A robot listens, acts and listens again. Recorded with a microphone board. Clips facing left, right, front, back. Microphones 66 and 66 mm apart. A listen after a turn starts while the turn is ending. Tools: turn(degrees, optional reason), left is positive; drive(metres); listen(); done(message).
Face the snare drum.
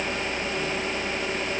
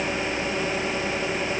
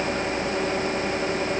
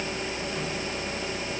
listen()
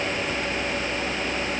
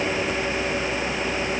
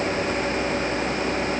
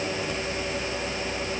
listen()
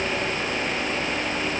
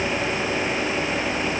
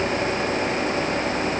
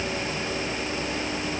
done("I can't make out a snare drum to turn to.")